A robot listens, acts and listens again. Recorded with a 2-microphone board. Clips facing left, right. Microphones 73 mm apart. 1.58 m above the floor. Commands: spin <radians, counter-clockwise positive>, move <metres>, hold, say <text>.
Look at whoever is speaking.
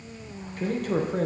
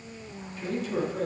spin 0.96
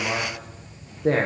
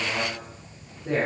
spin 1.31
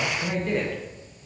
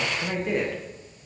say Found it: a man speaking, straight ahead, 1 to 2 m away.